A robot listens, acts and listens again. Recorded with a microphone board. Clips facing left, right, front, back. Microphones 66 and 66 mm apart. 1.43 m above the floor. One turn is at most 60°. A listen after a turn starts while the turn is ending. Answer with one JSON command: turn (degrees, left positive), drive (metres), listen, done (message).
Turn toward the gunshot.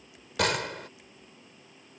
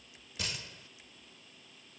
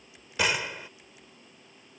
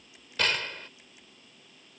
{"turn": 60}
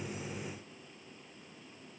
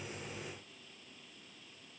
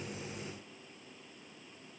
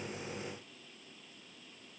{"turn": 20}
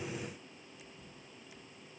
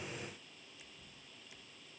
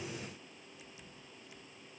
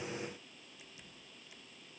{"done": "Facing where the gunshot came from. I can't hear it now."}